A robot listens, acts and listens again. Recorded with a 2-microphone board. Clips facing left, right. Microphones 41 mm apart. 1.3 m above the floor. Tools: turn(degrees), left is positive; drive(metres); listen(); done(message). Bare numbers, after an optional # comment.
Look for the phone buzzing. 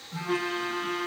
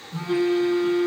# The phone buzzing: about 70° left or 110° left.
turn(70)
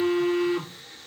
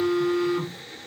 # So it is at 40° left.
turn(40)
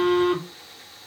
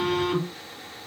done("Found it: a phone buzzing, straight ahead.")